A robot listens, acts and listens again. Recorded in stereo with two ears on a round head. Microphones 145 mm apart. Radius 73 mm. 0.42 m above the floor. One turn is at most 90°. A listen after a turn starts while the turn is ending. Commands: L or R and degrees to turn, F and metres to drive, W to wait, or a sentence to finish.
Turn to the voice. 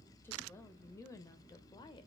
L25
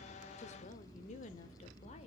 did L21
L40
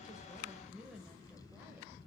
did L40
Found it: a woman speaking, straight ahead, 1 to 2 m away.